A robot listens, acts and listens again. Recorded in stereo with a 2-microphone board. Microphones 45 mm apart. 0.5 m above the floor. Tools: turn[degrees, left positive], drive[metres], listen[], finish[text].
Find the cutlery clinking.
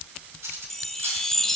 Action: turn[-90]
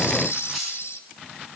Action: listen[]
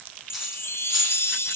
Action: listen[]
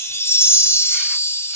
Action: finish[I heard cutlery clinking from this way, but can't make it out now.]